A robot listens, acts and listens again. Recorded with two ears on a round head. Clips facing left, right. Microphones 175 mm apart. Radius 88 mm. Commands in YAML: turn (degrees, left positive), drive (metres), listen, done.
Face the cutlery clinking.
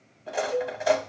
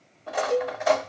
turn: 30
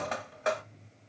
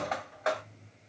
turn: 145
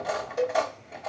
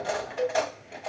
done: "Facing the cutlery clinking, 1 to 2 m away."